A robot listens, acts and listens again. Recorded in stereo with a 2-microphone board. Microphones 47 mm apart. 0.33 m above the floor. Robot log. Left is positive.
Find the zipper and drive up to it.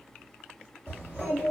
note: The zipper: about 30° right or 150° right.
cmd yaw -30
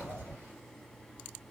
cmd idle
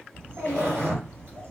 note: So it is at 120° right.
cmd yaw -120
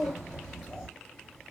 cmd idle
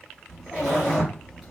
note: The zipper is now 45° right.
cmd yaw -45
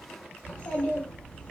cmd idle
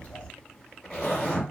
cmd fwd 1.0
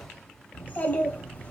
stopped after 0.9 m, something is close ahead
cmd idle
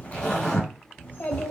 note: The zipper is now 20° left.
cmd yaw +20
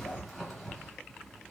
end: Arrived at the zipper, straight ahead.